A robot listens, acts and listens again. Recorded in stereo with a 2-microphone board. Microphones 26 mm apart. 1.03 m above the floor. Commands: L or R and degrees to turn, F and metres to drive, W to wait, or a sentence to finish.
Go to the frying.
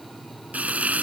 R90
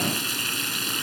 F1.0
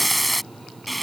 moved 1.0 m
F1.0
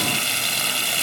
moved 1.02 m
F1.0
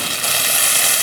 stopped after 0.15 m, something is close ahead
I am next to the frying.